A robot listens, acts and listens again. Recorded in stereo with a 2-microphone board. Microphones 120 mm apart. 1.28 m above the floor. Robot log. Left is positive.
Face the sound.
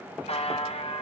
note: The buzzer: about 65° left or 115° left.
cmd yaw +65
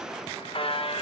note: So it is at 50° left.
cmd yaw +50
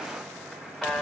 end: Found it: a buzzer, straight ahead.